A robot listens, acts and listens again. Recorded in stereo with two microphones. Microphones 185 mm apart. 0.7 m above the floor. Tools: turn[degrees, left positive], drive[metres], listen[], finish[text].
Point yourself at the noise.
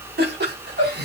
Thought: The laughter: about 65° right or 115° right.
Action: turn[-65]
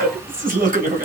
Thought: So it is at 50° right.
Action: turn[-50]
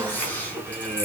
Thought: The laughter is now 10° left.
Action: turn[10]
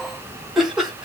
Action: finish[Facing the laughter.]